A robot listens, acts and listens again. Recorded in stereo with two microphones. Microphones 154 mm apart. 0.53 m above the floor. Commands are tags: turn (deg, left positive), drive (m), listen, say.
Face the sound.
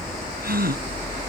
<turn deg="-90"/>
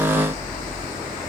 <say>I heard a gasp from this way, but can't make it out now.</say>